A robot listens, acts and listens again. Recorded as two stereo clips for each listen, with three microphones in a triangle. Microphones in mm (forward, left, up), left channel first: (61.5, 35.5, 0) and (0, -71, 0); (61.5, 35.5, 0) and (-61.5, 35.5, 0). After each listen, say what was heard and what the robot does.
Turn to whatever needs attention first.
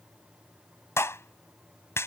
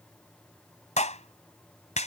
Keep listening.
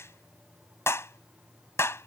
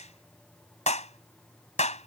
Keep listening.
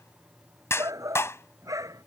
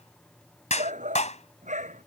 The shout: straight behind. Turn 180° left.
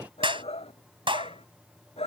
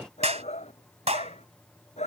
The shout is now 25° left. Turn 25° left.
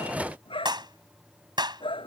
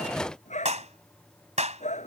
The shout is now 15° left. Turn 15° left.
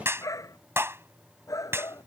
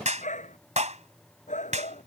Facing the shout.